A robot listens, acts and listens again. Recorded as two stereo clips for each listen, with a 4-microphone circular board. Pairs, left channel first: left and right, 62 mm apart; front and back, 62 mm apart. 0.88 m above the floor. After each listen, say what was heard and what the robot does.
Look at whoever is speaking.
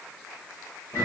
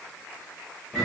Keep listening.
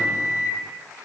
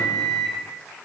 Keep listening.
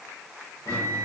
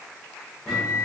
I can't make out anyone speaking to turn to.